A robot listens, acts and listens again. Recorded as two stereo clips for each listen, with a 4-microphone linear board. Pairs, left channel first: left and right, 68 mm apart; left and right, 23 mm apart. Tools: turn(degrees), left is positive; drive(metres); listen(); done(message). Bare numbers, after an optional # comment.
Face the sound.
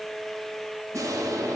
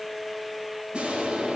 # The explosion: about 50° right or 130° right.
turn(-50)
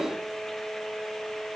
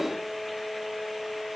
listen()
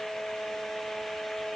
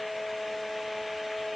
done("I heard an explosion, but can't make it out now. It was about straight ahead or 80° right.")